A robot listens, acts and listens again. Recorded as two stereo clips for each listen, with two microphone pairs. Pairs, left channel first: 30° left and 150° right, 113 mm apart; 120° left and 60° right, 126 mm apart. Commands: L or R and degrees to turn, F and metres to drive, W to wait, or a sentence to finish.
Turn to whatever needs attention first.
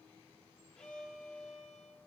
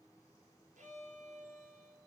W
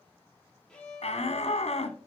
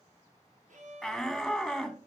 L30
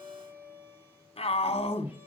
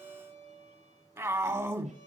Found it: a shout, straight ahead.